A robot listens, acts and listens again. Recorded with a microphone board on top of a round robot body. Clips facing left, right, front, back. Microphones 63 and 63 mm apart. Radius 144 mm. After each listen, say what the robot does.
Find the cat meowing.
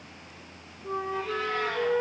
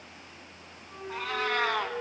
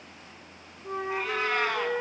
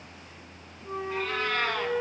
Turn 75° right.
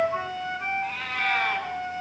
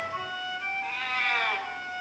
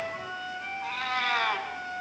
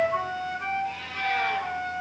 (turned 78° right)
Facing the cat meowing, 2 to 4 m away.